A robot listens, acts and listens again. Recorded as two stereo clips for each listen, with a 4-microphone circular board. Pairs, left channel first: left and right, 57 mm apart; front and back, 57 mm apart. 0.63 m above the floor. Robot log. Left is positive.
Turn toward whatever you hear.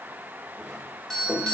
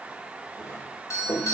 note: The doorbell: 10° left.
cmd yaw +10
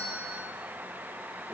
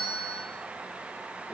end: Found it: a doorbell, straight ahead.